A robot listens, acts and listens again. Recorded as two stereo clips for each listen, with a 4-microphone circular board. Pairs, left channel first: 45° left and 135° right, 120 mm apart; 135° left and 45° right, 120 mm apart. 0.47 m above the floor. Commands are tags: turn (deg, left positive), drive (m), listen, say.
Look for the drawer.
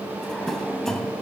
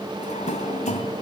<turn deg="130"/>
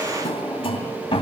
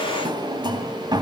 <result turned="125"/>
<say>Found it: a drawer, straight ahead, 2 to 4 m away.</say>